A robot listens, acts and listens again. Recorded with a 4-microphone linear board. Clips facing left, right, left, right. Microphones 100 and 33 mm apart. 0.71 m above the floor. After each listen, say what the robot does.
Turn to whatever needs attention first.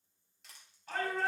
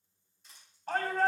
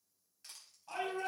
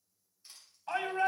Turn 45° right.
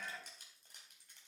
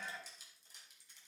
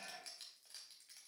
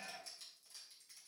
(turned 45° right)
Keep listening.
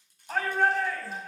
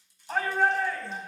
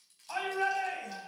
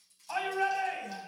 Facing the shout, over 4 m away.